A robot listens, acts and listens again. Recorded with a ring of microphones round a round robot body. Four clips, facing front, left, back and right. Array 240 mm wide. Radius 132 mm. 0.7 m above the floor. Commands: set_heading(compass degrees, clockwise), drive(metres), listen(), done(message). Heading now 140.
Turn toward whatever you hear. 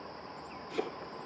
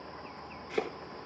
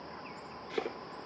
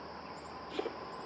set_heading(20)
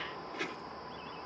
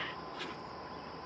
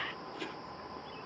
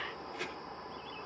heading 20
set_heading(35)
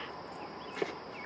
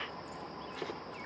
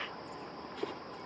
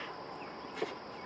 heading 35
done("Found it: chopping, straight ahead, over 4 m away.")